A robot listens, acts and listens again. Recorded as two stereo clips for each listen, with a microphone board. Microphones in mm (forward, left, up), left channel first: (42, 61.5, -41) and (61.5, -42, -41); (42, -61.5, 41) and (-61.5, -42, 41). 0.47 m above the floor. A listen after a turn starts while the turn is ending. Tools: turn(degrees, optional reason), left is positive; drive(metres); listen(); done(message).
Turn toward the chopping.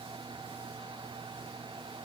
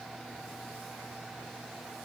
listen()
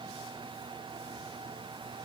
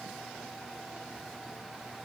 listen()
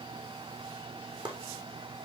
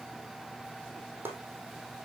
turn(degrees=-120, reason="The chopping: 120° right.")
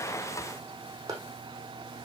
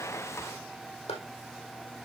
turn(degrees=-25, reason="The chopping is now 25° right.")
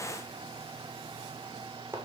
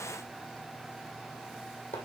turn(degrees=-10, reason="The chopping is now 10° right.")
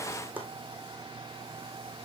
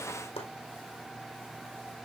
done("Found it: chopping, straight ahead, 2 to 4 m away.")